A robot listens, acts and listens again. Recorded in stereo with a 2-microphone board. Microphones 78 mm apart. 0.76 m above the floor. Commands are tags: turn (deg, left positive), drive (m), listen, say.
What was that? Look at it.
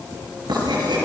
<turn deg="-90"/>
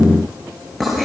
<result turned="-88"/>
<say>Found it: writing, straight ahead.</say>